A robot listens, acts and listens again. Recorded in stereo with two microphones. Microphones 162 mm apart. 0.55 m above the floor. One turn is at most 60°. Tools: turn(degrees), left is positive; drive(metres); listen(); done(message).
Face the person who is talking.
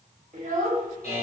turn(degrees=-55)
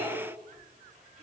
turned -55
listen()
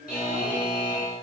listen()
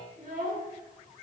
turn(degrees=-60)
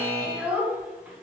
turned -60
turn(degrees=-10)
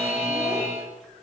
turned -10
listen()
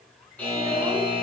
listen()
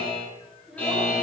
done("Found it: a child speaking, straight ahead.")